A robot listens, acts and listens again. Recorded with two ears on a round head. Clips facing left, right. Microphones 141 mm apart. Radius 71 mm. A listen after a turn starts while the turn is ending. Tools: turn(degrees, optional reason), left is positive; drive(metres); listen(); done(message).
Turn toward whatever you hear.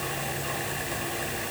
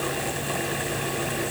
listen()
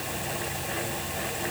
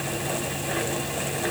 listen()
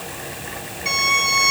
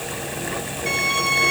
turn(degrees=50, reason="The violin: about 50° left or 130° left.")
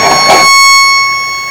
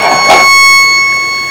done("Found it: a violin, straight ahead.")